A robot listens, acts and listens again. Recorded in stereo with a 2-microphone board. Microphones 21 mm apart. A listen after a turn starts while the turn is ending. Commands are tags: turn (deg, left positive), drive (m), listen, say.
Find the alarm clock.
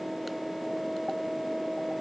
<listen/>
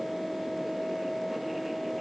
<listen/>
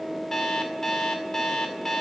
<turn deg="20"/>
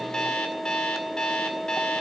<turn deg="140"/>
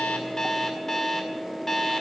<turn deg="20"/>
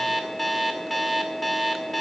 <say>Found it: an alarm clock, straight ahead, 2 to 4 m away.</say>